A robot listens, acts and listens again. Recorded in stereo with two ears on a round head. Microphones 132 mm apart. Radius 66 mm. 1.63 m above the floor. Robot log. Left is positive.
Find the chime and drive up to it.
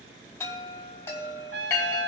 note: The chime: about 20° left or 160° left.
cmd yaw +20
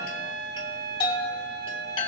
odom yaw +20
note: So it is at 140° left.
cmd yaw +140
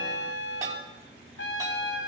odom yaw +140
cmd idle
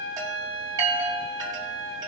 note: The chime is now 30° right.
cmd yaw -30
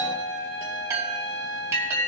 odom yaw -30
note: The chime is now 25° right.
cmd yaw -25
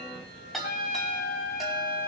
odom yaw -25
cmd fwd 1.0
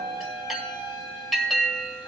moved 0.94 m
cmd fwd 1.0
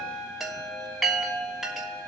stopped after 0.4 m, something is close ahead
end: I am next to the chime.